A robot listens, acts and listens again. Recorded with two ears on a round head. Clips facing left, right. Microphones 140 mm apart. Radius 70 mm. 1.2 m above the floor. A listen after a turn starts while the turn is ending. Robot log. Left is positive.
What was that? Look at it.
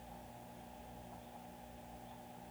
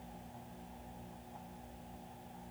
cmd idle
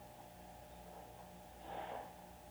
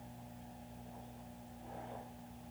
cmd idle
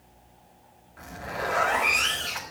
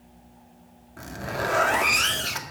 note: The zipper: about 60° right or 120° right.
cmd yaw -60
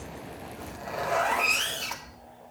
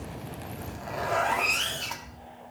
end: Found it: a zipper, straight ahead.